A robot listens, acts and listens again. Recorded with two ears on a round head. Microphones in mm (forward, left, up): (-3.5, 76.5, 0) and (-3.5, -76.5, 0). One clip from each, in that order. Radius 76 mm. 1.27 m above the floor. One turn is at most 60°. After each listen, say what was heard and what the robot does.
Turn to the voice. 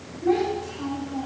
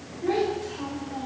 The child speaking: about 45° right or 135° right. Turn 45° right.
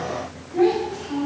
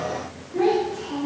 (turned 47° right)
Facing the child speaking.